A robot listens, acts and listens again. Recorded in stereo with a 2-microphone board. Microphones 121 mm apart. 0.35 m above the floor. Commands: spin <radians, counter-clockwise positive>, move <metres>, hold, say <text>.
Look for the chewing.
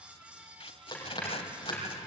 spin 0.61
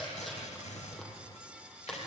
say Facing the chewing.